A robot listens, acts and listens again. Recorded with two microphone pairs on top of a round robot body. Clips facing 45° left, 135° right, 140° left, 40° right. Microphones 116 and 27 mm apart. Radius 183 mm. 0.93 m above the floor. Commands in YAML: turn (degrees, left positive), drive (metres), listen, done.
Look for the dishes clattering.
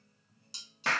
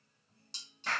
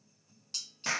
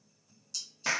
turn: 130
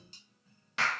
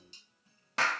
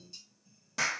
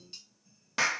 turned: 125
done: "Facing the dishes clattering."